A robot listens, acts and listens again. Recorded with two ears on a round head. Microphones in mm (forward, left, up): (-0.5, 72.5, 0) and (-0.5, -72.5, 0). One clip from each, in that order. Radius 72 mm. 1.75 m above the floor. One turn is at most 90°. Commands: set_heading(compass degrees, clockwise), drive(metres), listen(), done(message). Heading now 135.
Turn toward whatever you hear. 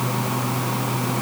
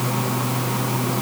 listen()
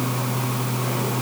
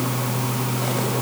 listen()
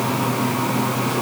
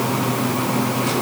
done("I can't make out anything.")